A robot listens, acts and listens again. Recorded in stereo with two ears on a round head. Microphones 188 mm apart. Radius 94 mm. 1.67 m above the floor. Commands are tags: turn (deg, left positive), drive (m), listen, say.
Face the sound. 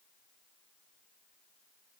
<listen/>
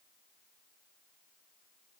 <listen/>
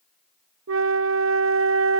<turn deg="-70"/>
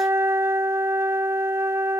<turn deg="-15"/>
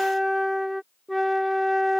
<say>Found it: a flute, straight ahead.</say>